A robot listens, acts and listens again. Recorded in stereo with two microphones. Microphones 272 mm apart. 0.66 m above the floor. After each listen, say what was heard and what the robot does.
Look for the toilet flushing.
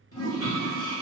The toilet flushing: about 70° left or 110° left. Turn 70° left.
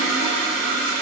Found it: a toilet flushing, straight ahead, 1 to 2 m away.